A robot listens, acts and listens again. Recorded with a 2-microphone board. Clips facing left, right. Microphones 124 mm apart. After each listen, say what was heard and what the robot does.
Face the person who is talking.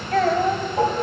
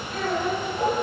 Turn 90° left.
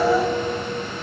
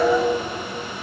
Keep listening.
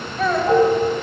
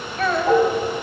Facing the child speaking, 2 to 4 m away.